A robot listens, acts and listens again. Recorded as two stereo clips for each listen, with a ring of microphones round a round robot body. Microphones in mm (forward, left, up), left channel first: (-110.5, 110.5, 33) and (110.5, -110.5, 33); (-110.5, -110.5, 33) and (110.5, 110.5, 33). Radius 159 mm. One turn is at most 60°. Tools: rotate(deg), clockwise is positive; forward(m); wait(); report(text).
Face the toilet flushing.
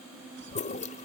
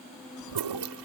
rotate(-60)
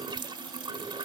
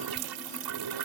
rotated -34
rotate(-30)
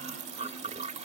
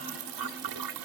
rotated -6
rotate(-25)
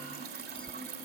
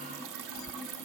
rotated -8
rotate(-15)
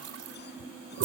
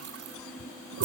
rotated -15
report("Found it: a toilet flushing, straight ahead.")